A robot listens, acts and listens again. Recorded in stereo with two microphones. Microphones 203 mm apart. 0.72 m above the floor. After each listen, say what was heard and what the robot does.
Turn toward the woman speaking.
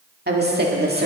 The woman speaking: about 55° right or 125° right. Turn 55° right.
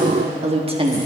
So it is at 25° right. Turn 25° right.
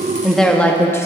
The woman speaking is now 15° left. Turn 15° left.
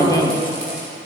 The woman speaking is now 20° left. Turn 20° left.
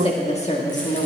The woman speaking is now 40° left. Turn 40° left.
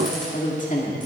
The woman speaking is now 40° left. Turn 40° left.
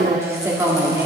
The woman speaking is now 15° right. Turn 15° right.
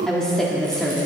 Found it: a woman speaking, straight ahead.